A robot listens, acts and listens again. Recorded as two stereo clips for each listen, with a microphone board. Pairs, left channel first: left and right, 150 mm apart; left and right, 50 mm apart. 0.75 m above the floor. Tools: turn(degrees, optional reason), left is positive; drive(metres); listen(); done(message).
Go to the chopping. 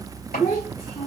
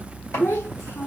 turn(degrees=90)
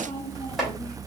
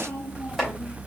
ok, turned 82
drive(metres=1.0)
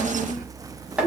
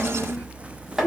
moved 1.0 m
drive(metres=1.0)
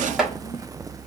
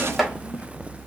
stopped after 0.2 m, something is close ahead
done("I am next to the chopping.")